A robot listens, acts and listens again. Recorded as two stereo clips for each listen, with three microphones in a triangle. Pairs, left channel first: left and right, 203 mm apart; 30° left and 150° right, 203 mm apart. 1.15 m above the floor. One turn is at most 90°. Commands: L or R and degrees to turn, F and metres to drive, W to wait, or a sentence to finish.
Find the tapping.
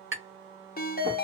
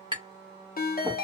R80
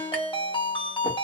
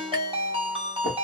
W
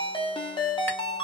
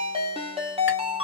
W
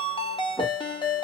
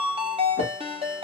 Facing where the tapping came from. I can't hear it now.